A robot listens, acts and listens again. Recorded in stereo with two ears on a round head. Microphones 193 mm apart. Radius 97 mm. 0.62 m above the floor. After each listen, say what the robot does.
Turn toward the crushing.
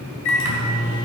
Keep listening.
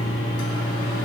Keep listening.
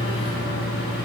I can't make out crushing to turn to.